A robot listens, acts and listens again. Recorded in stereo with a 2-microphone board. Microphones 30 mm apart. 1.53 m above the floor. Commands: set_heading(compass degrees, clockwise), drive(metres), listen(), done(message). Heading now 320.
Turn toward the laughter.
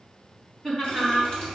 set_heading(290)
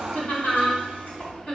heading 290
set_heading(150)
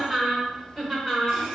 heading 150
done("Found it: laughter, straight ahead.")